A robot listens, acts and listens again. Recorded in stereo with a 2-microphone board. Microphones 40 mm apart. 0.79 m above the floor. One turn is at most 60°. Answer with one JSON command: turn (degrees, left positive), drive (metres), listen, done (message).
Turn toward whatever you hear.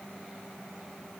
{"listen": true}
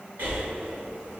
{"turn": -55}
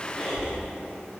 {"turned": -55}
{"done": "Found it: breathing, straight ahead."}